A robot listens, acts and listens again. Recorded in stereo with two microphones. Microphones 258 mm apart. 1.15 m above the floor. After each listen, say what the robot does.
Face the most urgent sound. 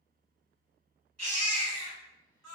Turn 90° right.
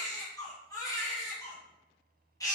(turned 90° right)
Turn 15° left.
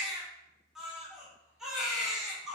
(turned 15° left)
Found it: a baby crying, straight ahead, 1 to 2 m away.